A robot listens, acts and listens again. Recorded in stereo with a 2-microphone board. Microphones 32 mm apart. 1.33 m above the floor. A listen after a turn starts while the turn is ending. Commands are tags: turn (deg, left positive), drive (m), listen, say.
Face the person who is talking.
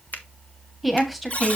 <turn deg="30"/>
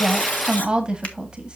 <turn deg="-25"/>
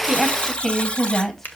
<turn deg="10"/>
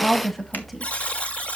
<say>Found it: a woman speaking, straight ahead.</say>